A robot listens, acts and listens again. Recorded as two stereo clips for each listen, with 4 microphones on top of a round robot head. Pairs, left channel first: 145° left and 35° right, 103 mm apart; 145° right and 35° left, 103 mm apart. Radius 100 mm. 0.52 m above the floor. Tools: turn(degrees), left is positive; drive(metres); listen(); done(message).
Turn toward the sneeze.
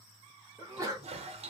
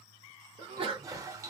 turn(degrees=20)
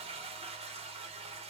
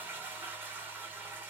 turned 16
done("Facing where the sneeze came from. I can't hear it now.")